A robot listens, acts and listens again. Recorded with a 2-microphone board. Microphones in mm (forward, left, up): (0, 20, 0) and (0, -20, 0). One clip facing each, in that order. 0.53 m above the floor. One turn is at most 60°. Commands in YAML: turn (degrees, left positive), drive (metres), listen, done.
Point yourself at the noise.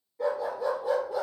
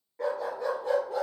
turn: -50
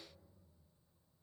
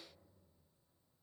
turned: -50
listen: true
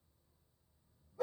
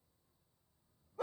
turn: -60
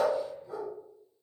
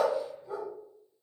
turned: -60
turn: -30
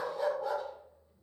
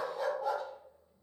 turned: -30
done: "Found it: a dog barking, straight ahead, over 4 m away."